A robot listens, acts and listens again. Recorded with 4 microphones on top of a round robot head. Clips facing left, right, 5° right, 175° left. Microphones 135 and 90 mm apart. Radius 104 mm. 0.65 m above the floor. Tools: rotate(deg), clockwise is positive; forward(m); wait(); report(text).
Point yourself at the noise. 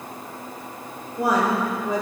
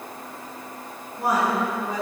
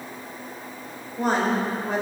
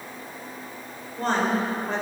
rotate(-80)
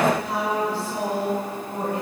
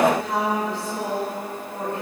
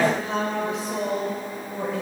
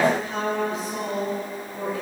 rotate(-15)
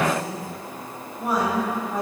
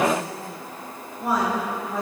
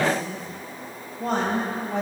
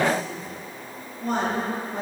report("Found it: a woman speaking, straight ahead, over 4 m away.")